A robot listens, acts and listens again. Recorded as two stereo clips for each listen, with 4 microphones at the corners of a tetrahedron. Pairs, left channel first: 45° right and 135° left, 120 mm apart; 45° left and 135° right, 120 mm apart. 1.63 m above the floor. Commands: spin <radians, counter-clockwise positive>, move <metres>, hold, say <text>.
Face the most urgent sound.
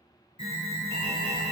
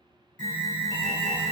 spin -0.26
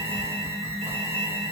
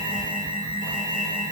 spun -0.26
say Found it: an alarm, straight ahead.